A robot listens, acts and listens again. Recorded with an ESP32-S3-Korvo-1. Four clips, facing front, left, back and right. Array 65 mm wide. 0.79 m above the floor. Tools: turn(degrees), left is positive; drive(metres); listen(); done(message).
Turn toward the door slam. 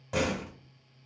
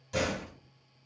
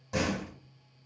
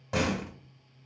turn(degrees=-70)
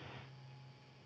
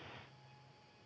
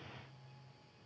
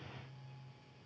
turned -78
turn(degrees=10)
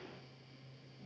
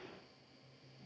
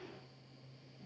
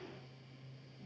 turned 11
done("Facing where the door slam came from. I can't hear it now.")